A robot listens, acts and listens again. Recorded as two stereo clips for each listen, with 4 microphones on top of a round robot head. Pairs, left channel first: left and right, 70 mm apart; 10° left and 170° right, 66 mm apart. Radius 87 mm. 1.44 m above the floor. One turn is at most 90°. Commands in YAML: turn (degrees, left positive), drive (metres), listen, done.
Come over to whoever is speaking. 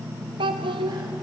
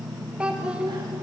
turn: -90
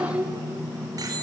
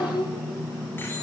turn: -15
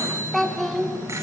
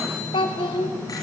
drive: 1.0
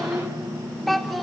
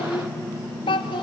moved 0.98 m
drive: 1.0
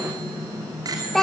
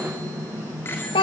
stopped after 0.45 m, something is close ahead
done: "Arrived at the child speaking, straight ahead."